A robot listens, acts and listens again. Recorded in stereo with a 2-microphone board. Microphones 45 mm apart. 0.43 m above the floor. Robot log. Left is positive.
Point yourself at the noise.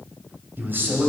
note: The man speaking: about 55° right or 125° right.
cmd yaw -55
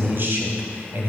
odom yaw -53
note: So it is at 60° right.
cmd yaw -60
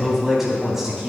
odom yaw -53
note: The man speaking is now 10° right.
cmd yaw -10
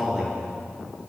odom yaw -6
end: Facing the man speaking.